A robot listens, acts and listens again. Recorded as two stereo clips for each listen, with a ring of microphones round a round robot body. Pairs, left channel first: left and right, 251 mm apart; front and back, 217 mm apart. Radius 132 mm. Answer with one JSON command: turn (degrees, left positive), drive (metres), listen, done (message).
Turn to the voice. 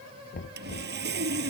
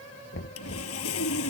{"listen": true}
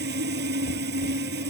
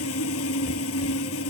{"listen": true}
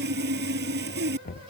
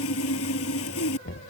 {"done": "I can't make out anyone speaking, only sawing and knocking."}